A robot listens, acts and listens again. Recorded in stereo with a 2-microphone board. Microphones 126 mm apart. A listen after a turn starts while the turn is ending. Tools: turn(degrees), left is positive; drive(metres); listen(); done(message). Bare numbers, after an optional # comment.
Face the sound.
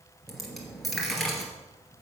turn(30)
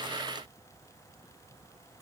listen()
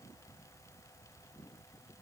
done("I heard a dropped coin, but can't make it out now. It was about 30° right or 150° left.")